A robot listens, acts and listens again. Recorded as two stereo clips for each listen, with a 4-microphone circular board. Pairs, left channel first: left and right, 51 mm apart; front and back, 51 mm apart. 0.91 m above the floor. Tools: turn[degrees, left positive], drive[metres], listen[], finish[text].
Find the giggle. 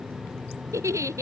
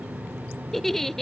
Thought: The giggle: 85° right.
Action: turn[-85]
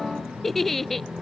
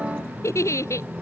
Action: finish[Facing the giggle.]